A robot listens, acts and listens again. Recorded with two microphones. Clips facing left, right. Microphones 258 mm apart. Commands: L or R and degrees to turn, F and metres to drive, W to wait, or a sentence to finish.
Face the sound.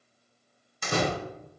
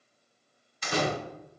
L55
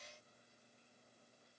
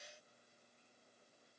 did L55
W
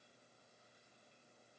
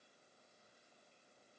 I heard a door slam, but can't make it out now. It was about straight ahead or 70° left.